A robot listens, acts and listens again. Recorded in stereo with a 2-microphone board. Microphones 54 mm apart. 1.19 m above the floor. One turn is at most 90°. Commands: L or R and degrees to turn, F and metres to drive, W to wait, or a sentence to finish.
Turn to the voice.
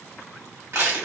W
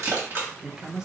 R30
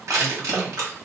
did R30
W
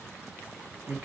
R90
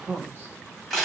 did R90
R40
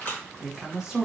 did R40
R10
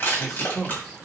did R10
Facing the woman speaking, 1 to 2 m away.